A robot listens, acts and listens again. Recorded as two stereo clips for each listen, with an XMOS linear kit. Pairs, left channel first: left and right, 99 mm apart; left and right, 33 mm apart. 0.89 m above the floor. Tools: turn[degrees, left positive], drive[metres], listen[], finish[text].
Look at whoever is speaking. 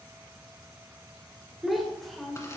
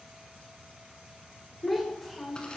Action: turn[30]
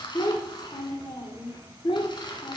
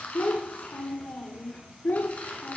Thought: So it is at 120° left.
Action: turn[120]
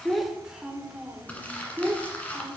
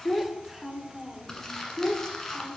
Thought: The child speaking is now 15° right.
Action: turn[-15]
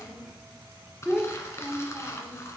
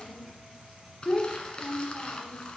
Action: finish[Found it: a child speaking, straight ahead.]